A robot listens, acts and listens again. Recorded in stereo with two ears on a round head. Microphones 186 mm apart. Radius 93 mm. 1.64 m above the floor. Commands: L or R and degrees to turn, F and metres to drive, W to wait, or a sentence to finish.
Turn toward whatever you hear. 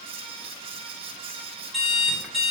L30
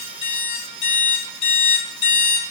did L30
L145
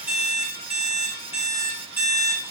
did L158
R10
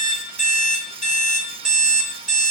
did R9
Facing the alarm clock, 2 to 4 m away.